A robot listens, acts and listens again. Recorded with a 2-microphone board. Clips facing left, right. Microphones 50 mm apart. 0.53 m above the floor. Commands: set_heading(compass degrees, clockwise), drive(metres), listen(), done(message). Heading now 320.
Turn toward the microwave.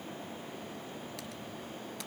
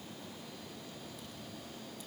listen()
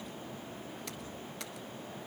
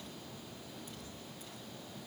listen()
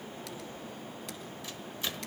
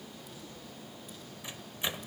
set_heading(340)
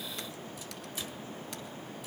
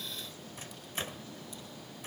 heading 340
set_heading(120)
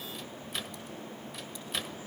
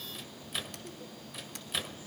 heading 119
done("Facing the microwave, 1 to 2 m away.")